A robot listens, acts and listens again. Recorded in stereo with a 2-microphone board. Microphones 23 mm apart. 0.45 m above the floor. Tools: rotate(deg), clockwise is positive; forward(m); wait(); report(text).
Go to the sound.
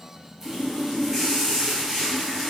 rotate(30)
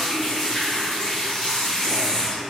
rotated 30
rotate(-15)
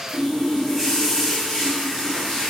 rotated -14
forward(1.0)
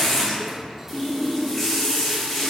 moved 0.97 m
forward(1.0)
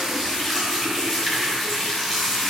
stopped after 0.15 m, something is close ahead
report("I am next to the running tap.")